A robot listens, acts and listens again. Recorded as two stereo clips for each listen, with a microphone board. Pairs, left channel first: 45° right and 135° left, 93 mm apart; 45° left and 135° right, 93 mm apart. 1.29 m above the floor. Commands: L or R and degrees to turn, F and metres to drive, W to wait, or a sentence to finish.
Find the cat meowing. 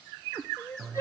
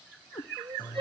L60
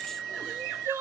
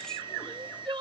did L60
W
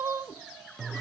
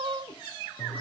W
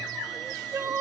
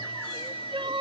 I heard a cat meowing from this way, but can't make it out now.